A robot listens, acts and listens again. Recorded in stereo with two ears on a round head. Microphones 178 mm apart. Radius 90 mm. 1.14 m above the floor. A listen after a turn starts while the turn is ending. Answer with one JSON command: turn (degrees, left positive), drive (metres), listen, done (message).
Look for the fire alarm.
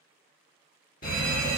{"turn": 45}
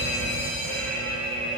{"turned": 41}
{"turn": 15}
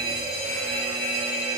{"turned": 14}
{"done": "Found it: a fire alarm, straight ahead, 1 to 2 m away."}